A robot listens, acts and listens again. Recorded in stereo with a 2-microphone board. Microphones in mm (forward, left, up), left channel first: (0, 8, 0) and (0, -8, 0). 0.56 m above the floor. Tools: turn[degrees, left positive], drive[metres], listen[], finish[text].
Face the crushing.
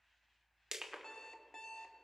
Thought: The crushing: about 55° right or 125° right.
Action: turn[-55]
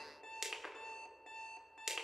Thought: So it is at 45° right.
Action: turn[-45]
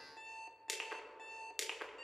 Action: finish[Facing the crushing.]